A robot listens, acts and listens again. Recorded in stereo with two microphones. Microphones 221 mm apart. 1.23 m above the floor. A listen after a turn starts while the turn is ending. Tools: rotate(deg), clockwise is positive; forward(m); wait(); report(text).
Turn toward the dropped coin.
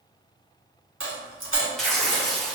rotate(65)
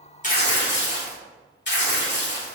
wait()
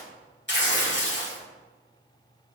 report("I heard a dropped coin, but can't make it out now. It was about straight ahead or 50° right.")